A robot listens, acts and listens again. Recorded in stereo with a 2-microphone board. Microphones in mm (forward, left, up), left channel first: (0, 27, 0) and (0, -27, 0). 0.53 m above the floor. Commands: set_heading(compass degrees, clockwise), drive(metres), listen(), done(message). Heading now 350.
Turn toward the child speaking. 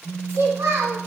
set_heading(50)
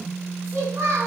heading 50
set_heading(115)
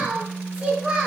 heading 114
set_heading(124)
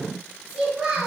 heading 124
done("Found it: a child speaking, straight ahead.")